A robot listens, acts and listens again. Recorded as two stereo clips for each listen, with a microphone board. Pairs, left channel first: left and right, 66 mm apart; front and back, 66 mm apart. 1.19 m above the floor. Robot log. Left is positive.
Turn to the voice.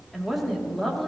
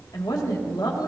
end: Found it: a woman speaking, straight ahead, 2 to 4 m away.